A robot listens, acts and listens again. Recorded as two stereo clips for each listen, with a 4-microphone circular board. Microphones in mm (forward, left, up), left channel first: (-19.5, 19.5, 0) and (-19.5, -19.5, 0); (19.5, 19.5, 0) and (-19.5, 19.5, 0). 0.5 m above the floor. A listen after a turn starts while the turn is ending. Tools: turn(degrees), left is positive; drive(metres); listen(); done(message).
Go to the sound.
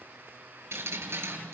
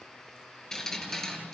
turn(degrees=-80)
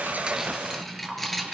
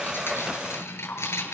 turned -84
drive(metres=1.0)
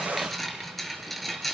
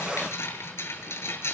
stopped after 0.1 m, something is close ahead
done("Something is in my way. I am facing the dripping but have not reached it.")